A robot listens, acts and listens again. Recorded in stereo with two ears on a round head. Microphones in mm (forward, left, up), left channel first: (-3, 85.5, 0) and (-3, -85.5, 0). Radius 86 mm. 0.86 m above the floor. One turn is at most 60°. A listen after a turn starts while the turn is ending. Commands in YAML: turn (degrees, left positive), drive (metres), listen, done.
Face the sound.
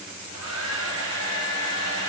turn: -60
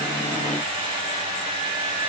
turn: -25
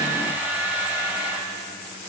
turn: -10
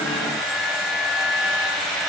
done: "Found it: a hair dryer, straight ahead."